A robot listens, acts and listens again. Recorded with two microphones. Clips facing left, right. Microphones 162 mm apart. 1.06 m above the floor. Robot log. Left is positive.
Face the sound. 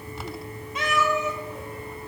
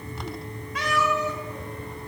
note: The cat meowing: about 20° left or 160° left.
cmd yaw +20
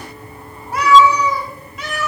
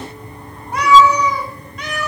end: Facing the cat meowing.